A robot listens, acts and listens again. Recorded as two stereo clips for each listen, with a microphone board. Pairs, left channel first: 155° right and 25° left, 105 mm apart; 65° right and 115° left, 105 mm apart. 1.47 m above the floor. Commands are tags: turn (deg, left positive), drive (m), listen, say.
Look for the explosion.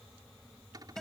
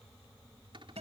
<listen/>
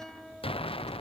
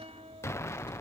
<turn deg="-130"/>
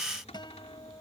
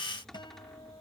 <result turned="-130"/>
<say>Facing where the explosion came from. I can't hear it now.</say>